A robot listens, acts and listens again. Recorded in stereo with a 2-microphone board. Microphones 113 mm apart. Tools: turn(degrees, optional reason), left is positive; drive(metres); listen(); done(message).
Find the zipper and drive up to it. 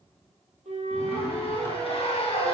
turn(degrees=60, reason="The zipper: about 60° left or 120° left.")
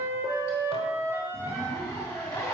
turn(degrees=25, reason="So it is at 25° left.")
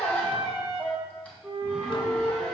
turn(degrees=10, reason="The zipper is now 10° left.")
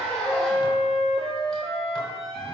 drive(metres=1.0)
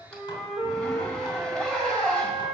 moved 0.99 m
drive(metres=1.0)
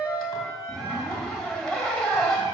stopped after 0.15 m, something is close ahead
done("Arrived at the zipper, straight ahead.")